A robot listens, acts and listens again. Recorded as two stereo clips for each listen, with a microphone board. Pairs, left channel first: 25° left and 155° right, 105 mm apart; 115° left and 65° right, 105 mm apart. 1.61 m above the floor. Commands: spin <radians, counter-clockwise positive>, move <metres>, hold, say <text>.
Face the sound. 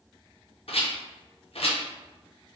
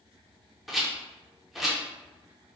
spin 0.35
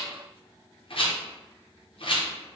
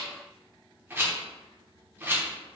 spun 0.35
say Facing the rattle, under 1 m away.